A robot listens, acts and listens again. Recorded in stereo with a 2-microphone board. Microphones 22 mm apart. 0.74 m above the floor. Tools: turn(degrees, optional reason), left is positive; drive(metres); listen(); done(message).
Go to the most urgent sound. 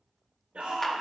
turn(degrees=-90)
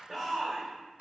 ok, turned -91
drive(metres=1.0)
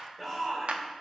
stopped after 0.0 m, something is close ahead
done("Something is in my way. I am facing the shout but have not reached it.")